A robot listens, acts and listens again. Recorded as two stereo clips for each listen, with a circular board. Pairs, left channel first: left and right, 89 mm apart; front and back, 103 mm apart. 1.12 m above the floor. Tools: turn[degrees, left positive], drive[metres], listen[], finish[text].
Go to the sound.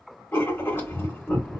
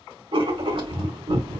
Thought: The writing: 155° left.
Action: turn[155]
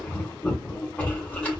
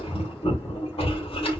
Thought: The writing is now 15° left.
Action: turn[15]
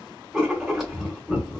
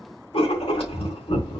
Action: drive[1.0]
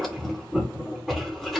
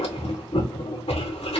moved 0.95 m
Action: drive[1.0]
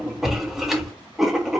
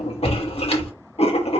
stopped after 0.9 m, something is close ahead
Action: finish[I am next to the writing.]